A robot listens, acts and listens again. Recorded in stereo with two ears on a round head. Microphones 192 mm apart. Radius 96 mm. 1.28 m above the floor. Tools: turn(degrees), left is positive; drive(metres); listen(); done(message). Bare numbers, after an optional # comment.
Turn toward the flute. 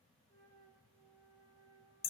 turn(30)
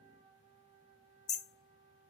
# So it is at 15° right.
turn(-15)
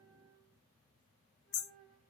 done("Facing the flute.")